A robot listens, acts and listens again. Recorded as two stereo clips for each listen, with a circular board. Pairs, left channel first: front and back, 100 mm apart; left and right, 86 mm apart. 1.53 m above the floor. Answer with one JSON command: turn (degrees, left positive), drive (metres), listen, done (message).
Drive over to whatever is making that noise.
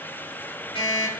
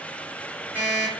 {"turn": -20}
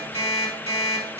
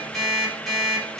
{"drive": 1.0}
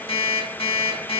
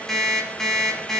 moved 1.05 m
{"drive": 1.0}
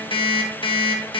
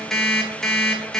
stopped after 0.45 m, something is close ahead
{"done": "Arrived at the alarm clock, straight ahead."}